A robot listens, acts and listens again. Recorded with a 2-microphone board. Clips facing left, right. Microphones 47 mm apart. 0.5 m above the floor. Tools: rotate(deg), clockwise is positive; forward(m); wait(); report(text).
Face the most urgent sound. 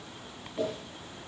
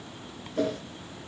wait()
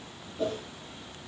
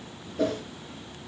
wait()
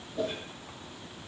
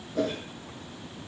report("I can't make out anything urgent, only a whoosh.")